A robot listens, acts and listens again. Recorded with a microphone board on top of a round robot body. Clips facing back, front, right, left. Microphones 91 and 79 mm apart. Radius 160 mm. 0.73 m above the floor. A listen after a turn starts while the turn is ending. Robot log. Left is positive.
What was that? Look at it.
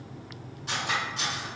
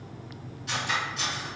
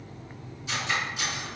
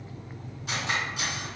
note: The cutlery clinking: 125° left.
cmd yaw +125
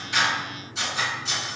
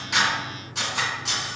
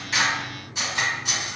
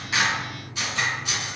note: The cutlery clinking is now 25° right.
cmd yaw -25
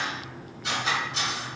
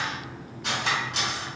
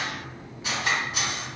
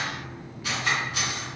note: The cutlery clinking is now 25° right.
cmd yaw -25
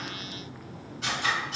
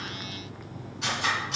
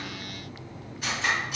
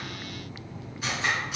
end: Facing the cutlery clinking.